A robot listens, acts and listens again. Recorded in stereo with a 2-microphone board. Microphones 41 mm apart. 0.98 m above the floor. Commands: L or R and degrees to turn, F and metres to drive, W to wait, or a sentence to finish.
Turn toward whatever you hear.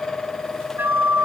R65
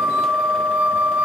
R45
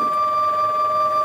Found it: a flute, straight ahead, 1 to 2 m away.